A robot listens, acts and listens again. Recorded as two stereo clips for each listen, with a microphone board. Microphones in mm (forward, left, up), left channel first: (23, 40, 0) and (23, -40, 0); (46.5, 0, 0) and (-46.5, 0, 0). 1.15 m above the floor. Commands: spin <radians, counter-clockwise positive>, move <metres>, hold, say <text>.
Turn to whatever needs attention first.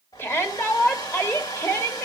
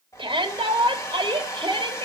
spin 2.62
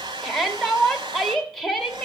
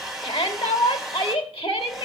say Found it: a shout, straight ahead, 2 to 4 m away.